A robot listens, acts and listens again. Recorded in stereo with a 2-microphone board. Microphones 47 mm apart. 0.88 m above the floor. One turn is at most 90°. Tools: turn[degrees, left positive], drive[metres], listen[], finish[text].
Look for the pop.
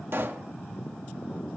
Thought: The pop: about 60° right or 120° right.
Action: turn[-60]
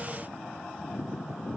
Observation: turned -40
Action: listen[]
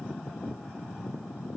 Action: finish[I heard a pop, but can't make it out now. It was about 20° right or 80° right.]